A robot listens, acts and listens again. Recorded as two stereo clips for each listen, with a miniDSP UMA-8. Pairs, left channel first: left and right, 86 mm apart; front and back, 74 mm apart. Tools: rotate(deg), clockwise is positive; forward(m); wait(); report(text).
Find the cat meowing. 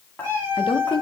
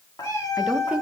rotate(30)
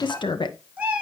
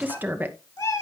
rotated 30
rotate(20)
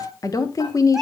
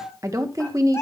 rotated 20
report("Found it: a cat meowing, straight ahead.")